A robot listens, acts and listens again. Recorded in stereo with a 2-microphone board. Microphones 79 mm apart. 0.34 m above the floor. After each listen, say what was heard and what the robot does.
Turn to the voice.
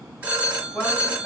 Turn 30° left.
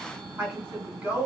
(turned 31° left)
So it is at 30° right. Turn 30° right.
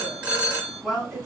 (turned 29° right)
Facing the woman speaking.